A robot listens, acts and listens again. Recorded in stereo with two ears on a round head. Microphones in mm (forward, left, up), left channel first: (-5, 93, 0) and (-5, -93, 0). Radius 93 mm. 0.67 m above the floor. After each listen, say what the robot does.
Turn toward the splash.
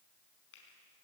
Keep listening.
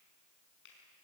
Keep listening.
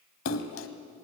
Turn 75° left.
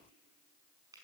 Keep listening.
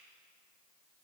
I heard a splash, but can't make it out now. It was about straight ahead or 30° left.